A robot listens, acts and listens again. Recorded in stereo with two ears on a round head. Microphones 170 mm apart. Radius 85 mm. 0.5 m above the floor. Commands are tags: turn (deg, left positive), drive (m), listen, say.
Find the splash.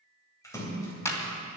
<turn deg="15"/>
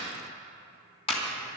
<listen/>
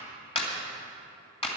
<say>I heard a splash, but can't make it out now. It was about straight ahead or 150° left.</say>